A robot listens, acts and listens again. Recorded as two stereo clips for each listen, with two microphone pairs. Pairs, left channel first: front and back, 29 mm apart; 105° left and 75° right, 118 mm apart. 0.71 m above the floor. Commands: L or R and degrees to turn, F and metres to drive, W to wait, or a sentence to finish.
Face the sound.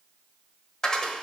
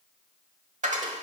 R65
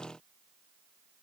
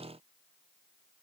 Facing where the dropped coin came from. I can't hear it now.